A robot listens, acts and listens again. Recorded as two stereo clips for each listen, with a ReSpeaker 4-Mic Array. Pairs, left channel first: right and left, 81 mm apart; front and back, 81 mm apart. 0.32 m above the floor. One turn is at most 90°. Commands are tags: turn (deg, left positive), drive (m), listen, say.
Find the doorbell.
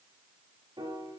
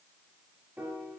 <listen/>
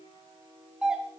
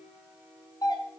<turn deg="10"/>
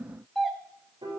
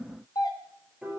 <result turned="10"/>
<say>Facing the doorbell, 2 to 4 m away.</say>